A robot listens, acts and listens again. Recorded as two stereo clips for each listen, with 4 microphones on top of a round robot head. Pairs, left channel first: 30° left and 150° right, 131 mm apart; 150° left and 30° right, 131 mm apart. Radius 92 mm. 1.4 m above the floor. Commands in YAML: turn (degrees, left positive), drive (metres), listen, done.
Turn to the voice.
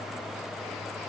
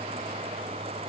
listen: true
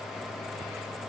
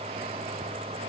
listen: true
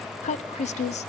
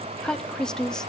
turn: 65
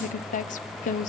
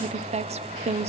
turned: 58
turn: 10
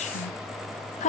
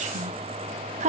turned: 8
done: "Found it: a woman speaking, straight ahead."